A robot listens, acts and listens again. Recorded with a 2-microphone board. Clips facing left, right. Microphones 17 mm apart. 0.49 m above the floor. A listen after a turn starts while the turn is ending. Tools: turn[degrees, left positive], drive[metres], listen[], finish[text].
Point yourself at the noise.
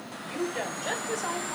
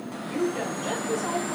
Thought: The woman speaking: about 25° left or 155° left.
Action: turn[25]
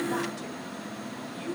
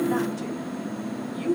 Thought: So it is at 10° right.
Action: turn[-10]
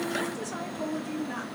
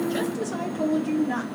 Thought: The woman speaking is now 20° right.
Action: turn[-20]
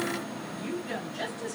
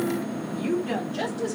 Thought: The woman speaking is now 30° right.
Action: turn[-30]
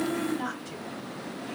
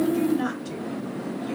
Thought: The woman speaking is now 20° right.
Action: turn[-20]
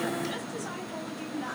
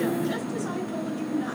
Thought: The woman speaking is now 10° right.
Action: turn[-10]
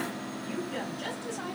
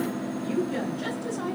Action: finish[Facing the woman speaking, 1 to 2 m away.]